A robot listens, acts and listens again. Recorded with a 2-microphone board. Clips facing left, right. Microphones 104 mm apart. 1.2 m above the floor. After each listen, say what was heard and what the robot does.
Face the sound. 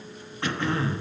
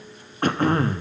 The throat clearing: about 45° right or 135° right. Turn 45° right.
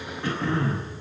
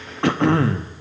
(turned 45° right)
So it is at 90° right. Turn 90° right.
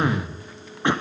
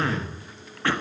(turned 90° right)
The throat clearing is now 20° left. Turn 20° left.
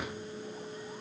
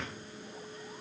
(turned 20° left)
Keep listening.
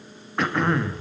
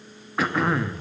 Facing the throat clearing.